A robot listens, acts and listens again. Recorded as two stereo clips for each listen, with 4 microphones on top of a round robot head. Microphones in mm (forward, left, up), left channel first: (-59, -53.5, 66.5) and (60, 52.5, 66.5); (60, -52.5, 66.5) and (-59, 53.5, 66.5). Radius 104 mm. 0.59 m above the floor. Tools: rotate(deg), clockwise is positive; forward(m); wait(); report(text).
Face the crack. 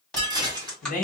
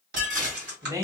rotate(-135)
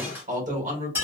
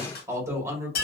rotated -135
report("Facing where the crack came from. I can't hear it now.")